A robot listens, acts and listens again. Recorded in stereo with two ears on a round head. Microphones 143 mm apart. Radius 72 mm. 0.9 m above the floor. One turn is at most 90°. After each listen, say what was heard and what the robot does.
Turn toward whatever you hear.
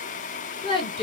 The woman speaking: about 35° left or 145° left. Turn 35° left.
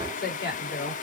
So it is at 110° left. Turn 90° left.
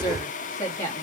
The woman speaking is now 20° left. Turn 20° left.
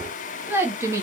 The woman speaking is now 20° right. Turn 20° right.
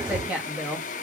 The woman speaking is now 10° right. Turn 10° right.
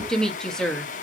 Found it: a woman speaking, straight ahead, 1 to 2 m away.